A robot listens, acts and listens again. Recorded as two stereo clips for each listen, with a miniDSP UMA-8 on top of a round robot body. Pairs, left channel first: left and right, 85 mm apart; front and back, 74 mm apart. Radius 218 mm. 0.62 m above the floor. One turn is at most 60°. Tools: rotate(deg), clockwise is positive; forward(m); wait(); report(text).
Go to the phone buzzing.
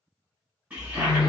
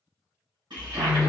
rotate(-60)
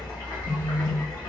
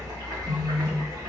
rotate(-60)
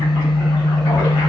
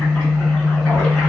rotate(-10)
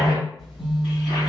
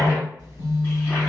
forward(1.0)
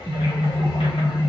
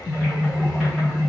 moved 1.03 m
forward(1.0)
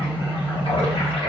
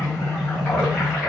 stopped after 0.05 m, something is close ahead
rotate(10)
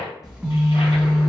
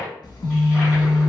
report("Arrived at the phone buzzing, straight ahead.")